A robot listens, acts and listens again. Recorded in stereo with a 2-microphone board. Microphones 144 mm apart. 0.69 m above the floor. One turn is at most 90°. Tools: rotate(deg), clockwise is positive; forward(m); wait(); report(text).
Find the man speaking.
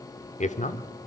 rotate(-55)
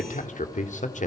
rotate(-65)
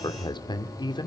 rotate(-35)
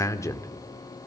rotate(-20)
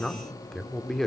report("Facing the man speaking.")